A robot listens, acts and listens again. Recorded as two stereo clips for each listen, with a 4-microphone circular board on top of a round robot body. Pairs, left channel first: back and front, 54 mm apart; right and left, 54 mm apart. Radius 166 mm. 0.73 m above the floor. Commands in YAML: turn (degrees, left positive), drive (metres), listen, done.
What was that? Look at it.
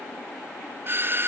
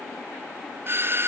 turn: 45
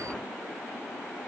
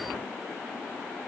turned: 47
listen: true
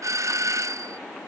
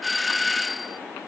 done: "Facing the doorbell."